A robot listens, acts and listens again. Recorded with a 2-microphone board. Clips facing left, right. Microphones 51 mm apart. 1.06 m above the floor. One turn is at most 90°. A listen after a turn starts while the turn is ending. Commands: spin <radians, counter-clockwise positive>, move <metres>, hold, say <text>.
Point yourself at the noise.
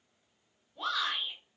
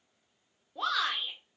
spin -1.57
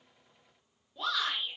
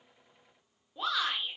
spin -0.26
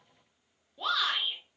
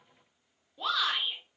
say Facing the shout.